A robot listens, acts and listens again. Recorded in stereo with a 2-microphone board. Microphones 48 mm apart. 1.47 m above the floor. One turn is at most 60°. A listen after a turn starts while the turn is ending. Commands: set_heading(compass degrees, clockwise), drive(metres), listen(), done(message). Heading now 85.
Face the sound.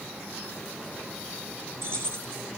set_heading(145)
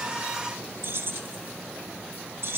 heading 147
set_heading(207)
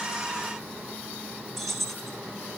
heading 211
done("Found it: keys jangling, straight ahead.")